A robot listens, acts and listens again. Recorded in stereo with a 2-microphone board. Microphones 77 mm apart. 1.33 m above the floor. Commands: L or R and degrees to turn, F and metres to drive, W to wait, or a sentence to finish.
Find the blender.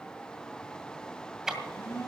L35
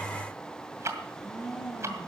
Found it: a blender, straight ahead, over 4 m away.